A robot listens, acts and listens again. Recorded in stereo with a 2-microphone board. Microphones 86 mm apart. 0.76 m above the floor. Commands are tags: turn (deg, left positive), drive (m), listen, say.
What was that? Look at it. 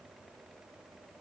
<listen/>
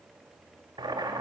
<turn deg="-55"/>
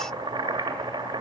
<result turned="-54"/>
<turn deg="-70"/>
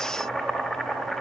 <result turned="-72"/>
<say>Facing the boiling.</say>